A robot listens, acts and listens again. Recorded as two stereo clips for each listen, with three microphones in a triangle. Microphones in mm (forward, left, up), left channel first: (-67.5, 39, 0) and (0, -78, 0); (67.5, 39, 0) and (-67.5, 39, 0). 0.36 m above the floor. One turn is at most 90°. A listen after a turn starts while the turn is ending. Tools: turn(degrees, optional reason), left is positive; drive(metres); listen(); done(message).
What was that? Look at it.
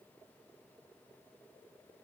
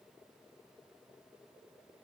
listen()
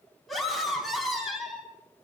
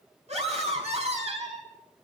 turn(degrees=-90, reason="The scream: 150° right.")
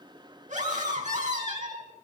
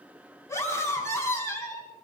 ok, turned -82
turn(degrees=-65, reason="The scream is now 65° right.")
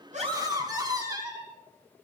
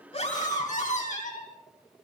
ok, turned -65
done("Facing the scream, 2 to 4 m away.")